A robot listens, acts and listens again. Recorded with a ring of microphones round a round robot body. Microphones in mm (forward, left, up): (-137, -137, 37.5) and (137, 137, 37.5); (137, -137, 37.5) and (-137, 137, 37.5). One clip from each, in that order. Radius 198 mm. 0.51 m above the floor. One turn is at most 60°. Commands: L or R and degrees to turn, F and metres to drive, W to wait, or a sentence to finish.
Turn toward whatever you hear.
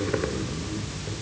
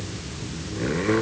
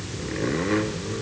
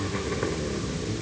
W
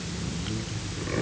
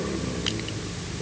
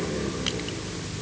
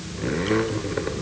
W
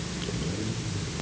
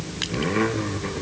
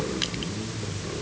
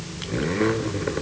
I can't make out anything.